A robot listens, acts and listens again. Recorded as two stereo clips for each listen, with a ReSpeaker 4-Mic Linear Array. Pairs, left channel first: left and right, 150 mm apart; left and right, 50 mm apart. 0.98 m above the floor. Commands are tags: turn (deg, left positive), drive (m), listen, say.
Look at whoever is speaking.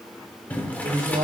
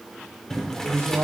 <turn deg="-70"/>
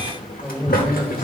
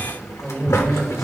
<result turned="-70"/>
<say>Found it: a man speaking, straight ahead.</say>